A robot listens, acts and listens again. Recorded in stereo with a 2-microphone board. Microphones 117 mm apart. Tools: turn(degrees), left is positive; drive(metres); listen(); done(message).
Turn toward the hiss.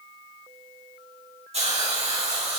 turn(degrees=-60)
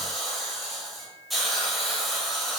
done("Facing the hiss, 2 to 4 m away.")